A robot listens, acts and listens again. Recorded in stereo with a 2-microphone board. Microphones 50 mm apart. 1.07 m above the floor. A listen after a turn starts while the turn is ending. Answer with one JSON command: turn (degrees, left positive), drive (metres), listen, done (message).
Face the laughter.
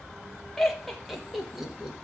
{"turn": -30}
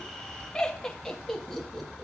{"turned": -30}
{"done": "Found it: laughter, straight ahead, 2 to 4 m away."}